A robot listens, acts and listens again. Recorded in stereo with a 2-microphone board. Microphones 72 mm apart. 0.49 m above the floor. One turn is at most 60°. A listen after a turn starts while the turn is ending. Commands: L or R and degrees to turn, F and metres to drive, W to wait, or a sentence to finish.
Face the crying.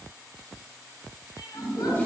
L60
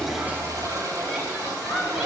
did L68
Facing the crying, 1 to 2 m away.